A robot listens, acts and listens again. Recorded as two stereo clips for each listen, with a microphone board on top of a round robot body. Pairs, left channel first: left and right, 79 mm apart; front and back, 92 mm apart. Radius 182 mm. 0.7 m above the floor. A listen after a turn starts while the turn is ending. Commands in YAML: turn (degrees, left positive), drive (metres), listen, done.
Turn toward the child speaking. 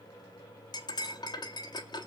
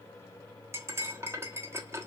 listen: true
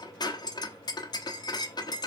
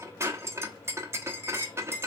listen: true
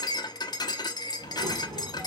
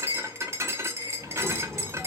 turn: -95
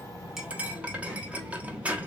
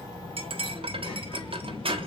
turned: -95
turn: -15
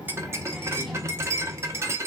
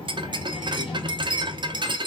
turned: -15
done: "Found it: a child speaking, straight ahead."